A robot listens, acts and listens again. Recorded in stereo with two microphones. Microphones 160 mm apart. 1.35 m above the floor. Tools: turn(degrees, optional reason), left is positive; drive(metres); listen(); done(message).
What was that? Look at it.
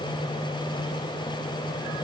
listen()
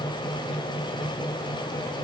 listen()
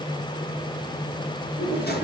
turn(degrees=70, reason="The drawer: about 70° left or 110° left.")
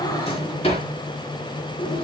turn(degrees=35, reason="So it is at 35° left.")
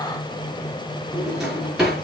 done("Found it: a drawer, straight ahead.")